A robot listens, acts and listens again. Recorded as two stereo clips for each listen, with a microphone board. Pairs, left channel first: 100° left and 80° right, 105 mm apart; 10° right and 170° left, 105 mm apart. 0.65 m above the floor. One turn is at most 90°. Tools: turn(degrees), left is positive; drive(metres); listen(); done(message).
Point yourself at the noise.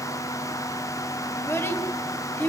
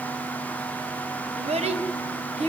turn(degrees=90)
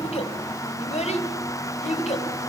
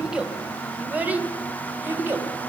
turn(degrees=90)
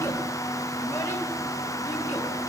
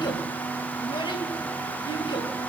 turn(degrees=15)
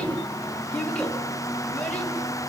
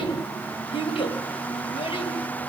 turn(degrees=20)
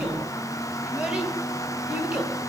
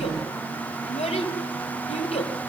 done("Found it: a child speaking, straight ahead.")